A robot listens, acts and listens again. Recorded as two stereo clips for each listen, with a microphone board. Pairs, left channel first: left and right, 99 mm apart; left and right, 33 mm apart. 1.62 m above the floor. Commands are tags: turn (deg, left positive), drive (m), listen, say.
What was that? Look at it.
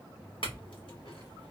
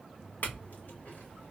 <turn deg="60"/>
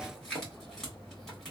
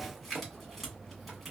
<say>Facing the clink, 1 to 2 m away.</say>